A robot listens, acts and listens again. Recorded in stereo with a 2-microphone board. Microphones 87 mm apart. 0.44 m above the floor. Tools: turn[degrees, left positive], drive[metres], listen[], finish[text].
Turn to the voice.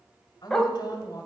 Thought: The woman speaking: about 50° left or 130° left.
Action: turn[50]
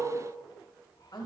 Thought: So it is at 70° left.
Action: turn[70]
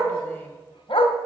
Action: listen[]
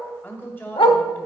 Thought: The woman speaking is now 30° left.
Action: turn[30]
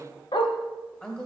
Thought: The woman speaking is now 10° left.
Action: turn[10]
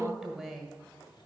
Action: finish[Found it: a woman speaking, straight ahead, 1 to 2 m away.]